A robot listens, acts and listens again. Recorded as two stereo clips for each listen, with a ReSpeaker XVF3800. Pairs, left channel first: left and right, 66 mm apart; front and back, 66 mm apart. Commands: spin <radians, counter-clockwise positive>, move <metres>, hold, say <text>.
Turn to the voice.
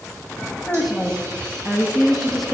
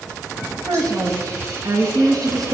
spin 3.14
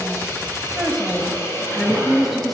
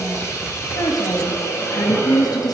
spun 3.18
say Facing the woman speaking, 1 to 2 m away.